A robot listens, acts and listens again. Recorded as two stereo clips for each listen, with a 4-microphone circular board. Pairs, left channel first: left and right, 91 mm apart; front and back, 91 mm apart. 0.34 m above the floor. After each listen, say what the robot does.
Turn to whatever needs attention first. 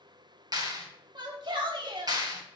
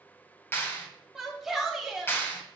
Turn 95° right.
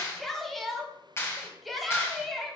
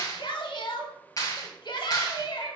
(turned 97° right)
Found it: a shout, straight ahead, 1 to 2 m away.